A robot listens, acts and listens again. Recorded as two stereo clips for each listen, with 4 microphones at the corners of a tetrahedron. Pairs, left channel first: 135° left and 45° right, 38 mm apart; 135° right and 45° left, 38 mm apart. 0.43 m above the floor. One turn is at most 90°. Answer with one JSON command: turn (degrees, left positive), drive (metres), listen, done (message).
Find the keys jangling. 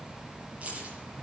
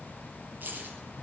{"turn": 10}
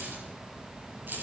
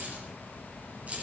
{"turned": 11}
{"turn": -10}
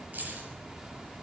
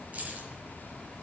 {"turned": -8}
{"done": "Found it: keys jangling, straight ahead, over 4 m away."}